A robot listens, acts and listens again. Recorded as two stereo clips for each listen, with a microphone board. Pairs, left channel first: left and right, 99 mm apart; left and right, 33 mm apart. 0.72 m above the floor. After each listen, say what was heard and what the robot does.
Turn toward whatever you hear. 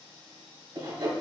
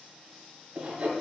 The sawing: about 55° right or 125° right. Turn 55° right.
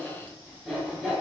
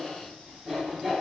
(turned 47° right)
Found it: sawing, straight ahead.